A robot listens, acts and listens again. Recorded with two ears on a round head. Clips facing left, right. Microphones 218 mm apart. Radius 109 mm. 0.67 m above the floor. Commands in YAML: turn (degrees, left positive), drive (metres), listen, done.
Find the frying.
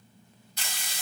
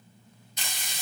turn: -20
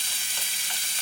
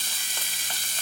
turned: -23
turn: -140
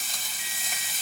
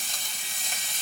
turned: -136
done: "Facing the frying."